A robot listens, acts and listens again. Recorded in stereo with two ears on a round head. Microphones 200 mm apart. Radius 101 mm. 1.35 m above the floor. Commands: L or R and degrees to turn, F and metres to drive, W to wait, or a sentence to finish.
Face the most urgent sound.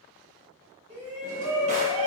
R30
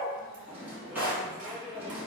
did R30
R125
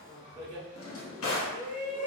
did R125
R20
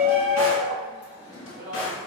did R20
Facing the shout, 1 to 2 m away.